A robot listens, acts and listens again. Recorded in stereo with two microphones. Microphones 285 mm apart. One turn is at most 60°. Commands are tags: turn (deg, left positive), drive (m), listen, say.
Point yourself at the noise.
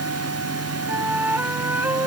<turn deg="-30"/>
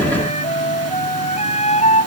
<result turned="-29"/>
<turn deg="25"/>
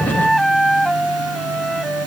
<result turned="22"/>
<say>Facing the flute.</say>